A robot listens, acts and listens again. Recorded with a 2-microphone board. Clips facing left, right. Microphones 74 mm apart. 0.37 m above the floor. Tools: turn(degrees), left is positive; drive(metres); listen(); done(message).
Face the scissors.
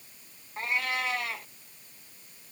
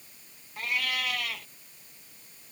listen()
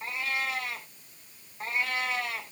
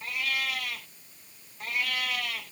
listen()
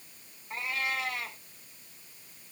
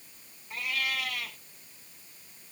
done("I can't make out scissors, only a cat meowing.")